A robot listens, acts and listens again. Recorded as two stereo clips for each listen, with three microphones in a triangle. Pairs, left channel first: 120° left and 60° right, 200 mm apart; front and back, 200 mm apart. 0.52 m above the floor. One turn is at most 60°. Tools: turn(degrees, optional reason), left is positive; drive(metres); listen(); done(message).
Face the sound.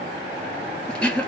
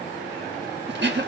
turn(degrees=-60, reason="The throat clearing: 155° right.")
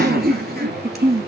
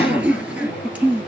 turn(degrees=-60, reason="The throat clearing is now 95° right.")
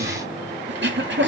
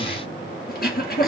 turn(degrees=-40, reason="The throat clearing is now 40° right.")
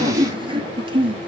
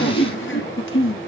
done("Facing the throat clearing, 1 to 2 m away.")